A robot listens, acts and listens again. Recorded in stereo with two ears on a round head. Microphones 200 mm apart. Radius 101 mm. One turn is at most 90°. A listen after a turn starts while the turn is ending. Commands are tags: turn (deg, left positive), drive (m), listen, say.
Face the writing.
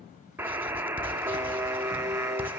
<turn deg="-30"/>
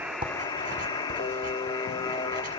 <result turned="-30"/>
<listen/>
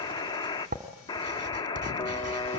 <turn deg="-90"/>
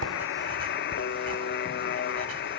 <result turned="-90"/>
<turn deg="-50"/>
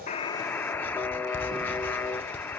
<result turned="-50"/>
<turn deg="10"/>
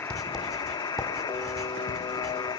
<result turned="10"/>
<say>Found it: writing, straight ahead.</say>